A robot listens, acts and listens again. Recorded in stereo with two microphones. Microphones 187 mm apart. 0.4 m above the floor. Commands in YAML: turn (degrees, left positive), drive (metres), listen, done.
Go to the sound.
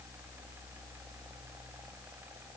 listen: true
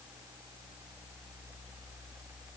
listen: true
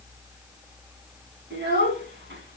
turn: -90
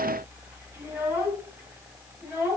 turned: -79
turn: -10
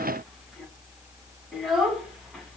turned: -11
drive: 1.0
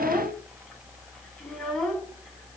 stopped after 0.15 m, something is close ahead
done: "Blocked. The child speaking is further on, straight ahead."